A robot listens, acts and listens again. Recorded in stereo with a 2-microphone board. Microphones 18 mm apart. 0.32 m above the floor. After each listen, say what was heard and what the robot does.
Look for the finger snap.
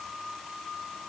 Keep listening.
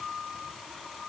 Keep listening.
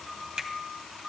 The finger snap: about 50° right or 130° right. Turn 50° right.
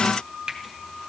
So it is at 70° right. Turn 70° right.
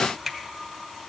The finger snap is now 10° left. Turn 10° left.
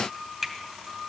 Found it: a finger snap, straight ahead.